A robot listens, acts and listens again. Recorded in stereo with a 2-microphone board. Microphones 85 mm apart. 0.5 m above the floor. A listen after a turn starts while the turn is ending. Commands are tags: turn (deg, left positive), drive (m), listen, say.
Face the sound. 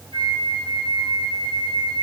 <turn deg="60"/>
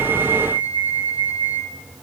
<turn deg="60"/>
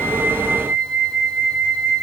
<say>Facing the flute, 2 to 4 m away.</say>